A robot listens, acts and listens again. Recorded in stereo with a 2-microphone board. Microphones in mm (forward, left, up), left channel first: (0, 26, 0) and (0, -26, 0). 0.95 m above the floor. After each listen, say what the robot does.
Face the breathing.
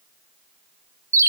Keep listening.
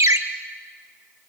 Keep listening.
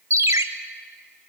I can't make out breathing, only a ringtone.